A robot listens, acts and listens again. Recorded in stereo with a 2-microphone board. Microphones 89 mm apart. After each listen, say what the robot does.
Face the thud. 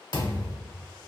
Turn 50° left.
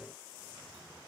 Keep listening.
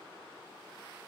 I heard a thud, but can't make it out now. It was about straight ahead or 80° left.